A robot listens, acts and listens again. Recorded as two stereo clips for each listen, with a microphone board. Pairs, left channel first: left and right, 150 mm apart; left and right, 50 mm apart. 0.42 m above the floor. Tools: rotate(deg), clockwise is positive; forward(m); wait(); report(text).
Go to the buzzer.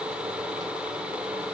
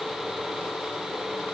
wait()
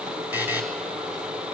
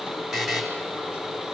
rotate(30)
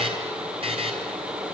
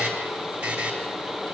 rotate(140)
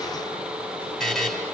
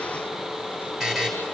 forward(1.0)
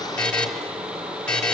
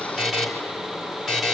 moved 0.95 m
rotate(-10)
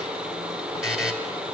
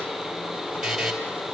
forward(1.0)
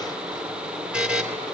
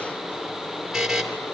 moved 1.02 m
forward(1.0)
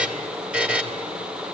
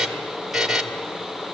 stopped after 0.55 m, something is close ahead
rotate(10)
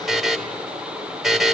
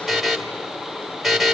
report("I am next to the buzzer.")